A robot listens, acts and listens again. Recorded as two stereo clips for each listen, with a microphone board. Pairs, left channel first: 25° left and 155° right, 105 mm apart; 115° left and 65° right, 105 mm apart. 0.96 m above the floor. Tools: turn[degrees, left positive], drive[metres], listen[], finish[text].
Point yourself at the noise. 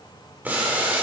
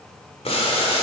Thought: The boiling: 130° left.
Action: turn[130]
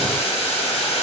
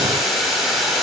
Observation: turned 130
Thought: The boiling is now 20° left.
Action: turn[20]
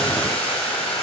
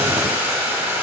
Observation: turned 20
Action: finish[Found it: boiling, straight ahead, 2 to 4 m away.]